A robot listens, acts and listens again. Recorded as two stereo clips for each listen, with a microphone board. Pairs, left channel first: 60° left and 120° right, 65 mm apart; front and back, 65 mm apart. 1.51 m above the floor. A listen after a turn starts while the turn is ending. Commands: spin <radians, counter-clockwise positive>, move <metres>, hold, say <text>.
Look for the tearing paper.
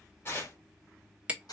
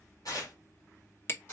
spin 0.17
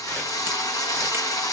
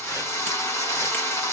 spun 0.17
hold
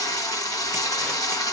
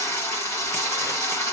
hold
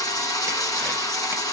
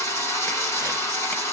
say I heard tearing paper from this way, but can't make it out now.